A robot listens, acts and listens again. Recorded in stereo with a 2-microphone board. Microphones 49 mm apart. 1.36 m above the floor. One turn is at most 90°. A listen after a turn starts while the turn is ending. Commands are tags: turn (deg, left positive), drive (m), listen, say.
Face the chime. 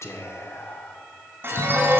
<turn deg="-50"/>
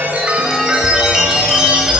<turn deg="-15"/>
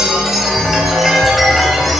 <say>Found it: a chime, straight ahead.</say>